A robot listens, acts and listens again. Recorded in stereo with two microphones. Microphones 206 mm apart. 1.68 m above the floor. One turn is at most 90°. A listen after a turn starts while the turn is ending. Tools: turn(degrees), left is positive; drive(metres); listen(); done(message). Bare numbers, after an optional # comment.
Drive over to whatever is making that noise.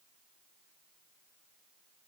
listen()
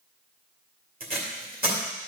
# The tape being pulled: about 45° right or 135° right.
turn(-45)
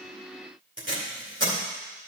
# So it is at 85° right.
turn(-85)
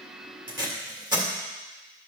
# The tape being pulled is now 20° right.
turn(-20)
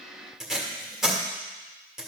drive(1.0)
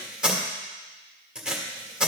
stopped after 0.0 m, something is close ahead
done("Something is in my way. I am facing the tape being pulled but have not reached it.")